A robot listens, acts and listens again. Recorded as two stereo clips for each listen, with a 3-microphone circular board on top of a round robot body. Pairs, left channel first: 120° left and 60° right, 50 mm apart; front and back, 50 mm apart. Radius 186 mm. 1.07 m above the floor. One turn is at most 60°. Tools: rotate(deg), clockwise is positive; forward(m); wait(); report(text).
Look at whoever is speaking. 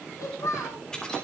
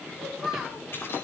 rotate(-60)
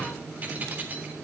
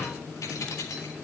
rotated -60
rotate(-35)
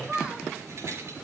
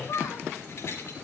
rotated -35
rotate(-20)
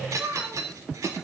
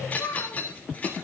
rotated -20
report("Facing the child speaking, over 4 m away.")